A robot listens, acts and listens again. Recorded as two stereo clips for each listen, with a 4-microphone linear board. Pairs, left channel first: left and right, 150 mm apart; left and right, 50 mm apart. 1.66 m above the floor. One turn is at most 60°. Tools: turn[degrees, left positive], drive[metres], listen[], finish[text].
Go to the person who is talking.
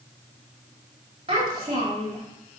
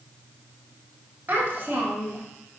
Thought: The child speaking: about 40° right or 140° right.
Action: turn[-40]
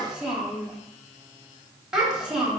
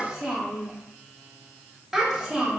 Action: drive[1.0]
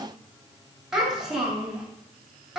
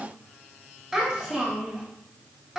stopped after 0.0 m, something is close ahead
Action: finish[Something is in my way. I am facing the child speaking but have not reached it.]